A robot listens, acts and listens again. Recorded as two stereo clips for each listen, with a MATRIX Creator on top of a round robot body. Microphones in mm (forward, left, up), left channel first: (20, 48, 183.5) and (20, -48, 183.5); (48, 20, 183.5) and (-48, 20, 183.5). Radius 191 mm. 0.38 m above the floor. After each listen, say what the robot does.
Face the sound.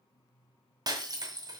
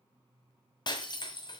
Turn 40° right.
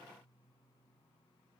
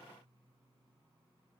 I heard breaking glass from this way, but can't make it out now.